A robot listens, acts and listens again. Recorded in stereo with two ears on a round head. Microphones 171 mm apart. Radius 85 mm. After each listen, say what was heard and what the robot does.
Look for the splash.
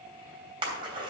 The splash: about 25° right or 155° right. Turn 25° right.
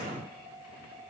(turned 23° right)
Keep listening.
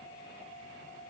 I heard a splash, but can't make it out now. It was about 5° right or 130° right.